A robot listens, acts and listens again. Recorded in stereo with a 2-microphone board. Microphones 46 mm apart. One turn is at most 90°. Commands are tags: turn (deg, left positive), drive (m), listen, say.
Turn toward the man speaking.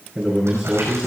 <turn deg="-30"/>
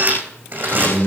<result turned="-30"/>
<turn deg="15"/>
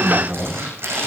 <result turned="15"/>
<say>Facing the man speaking.</say>